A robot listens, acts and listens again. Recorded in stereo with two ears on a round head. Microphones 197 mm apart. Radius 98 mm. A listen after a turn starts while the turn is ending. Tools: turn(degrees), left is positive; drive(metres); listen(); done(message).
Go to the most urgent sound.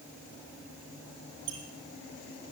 listen()
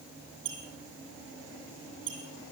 listen()
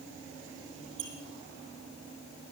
done("I can't make out anything urgent to turn to.")